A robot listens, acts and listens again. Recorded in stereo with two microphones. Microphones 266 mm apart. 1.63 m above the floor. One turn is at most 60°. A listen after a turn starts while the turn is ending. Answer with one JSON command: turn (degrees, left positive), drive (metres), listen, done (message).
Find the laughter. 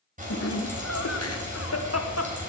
{"turn": 60}
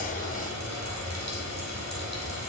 {"listen": true}
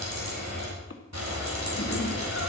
{"turn": 50}
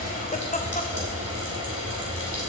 {"turn": 30}
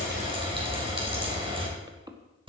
{"turn": -15}
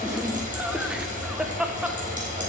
{"done": "Found it: laughter, straight ahead, 1 to 2 m away."}